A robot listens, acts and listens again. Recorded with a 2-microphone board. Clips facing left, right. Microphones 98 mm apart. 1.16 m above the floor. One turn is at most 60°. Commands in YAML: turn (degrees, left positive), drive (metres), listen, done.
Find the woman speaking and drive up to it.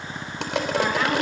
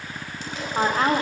turn: -35
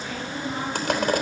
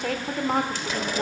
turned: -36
turn: -60
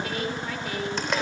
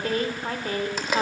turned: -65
turn: -45
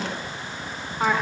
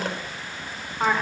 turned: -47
drive: 1.0
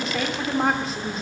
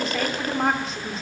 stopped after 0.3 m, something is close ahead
done: "Something is in my way. I am facing the woman speaking but have not reached it."